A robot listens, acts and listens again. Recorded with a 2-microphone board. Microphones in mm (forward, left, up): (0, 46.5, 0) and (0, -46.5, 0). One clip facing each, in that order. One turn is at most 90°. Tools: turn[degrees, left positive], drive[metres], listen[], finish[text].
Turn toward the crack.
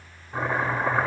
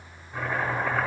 Action: listen[]
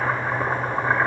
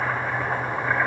Action: listen[]
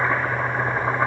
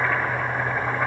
Action: finish[I can't make out a crack to turn to.]